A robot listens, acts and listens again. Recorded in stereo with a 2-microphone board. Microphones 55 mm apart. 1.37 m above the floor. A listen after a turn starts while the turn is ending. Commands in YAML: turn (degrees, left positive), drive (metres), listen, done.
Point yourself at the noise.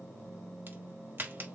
turn: -40
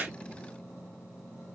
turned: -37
listen: true
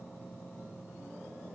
done: "I heard a crack, but can't make it out now. It was about straight ahead or 105° right."